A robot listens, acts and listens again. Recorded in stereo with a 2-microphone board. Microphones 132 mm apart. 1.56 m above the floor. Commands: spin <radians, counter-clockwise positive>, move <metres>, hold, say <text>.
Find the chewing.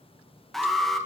hold
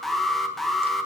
hold
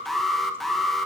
say I can't make out chewing, only an alarm.